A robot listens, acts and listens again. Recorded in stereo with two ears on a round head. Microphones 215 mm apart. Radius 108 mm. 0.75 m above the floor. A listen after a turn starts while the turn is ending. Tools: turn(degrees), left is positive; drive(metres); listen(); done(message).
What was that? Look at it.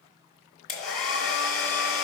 turn(degrees=30)
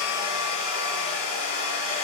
turn(degrees=-25)
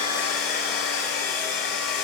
done("Facing the hair dryer.")